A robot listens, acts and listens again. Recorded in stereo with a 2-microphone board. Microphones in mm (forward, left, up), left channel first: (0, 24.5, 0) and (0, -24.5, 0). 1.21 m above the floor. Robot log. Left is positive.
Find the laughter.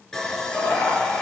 cmd yaw +90
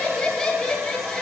note: So it is at 10° left.
cmd yaw +10
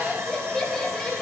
end: Found it: laughter, straight ahead.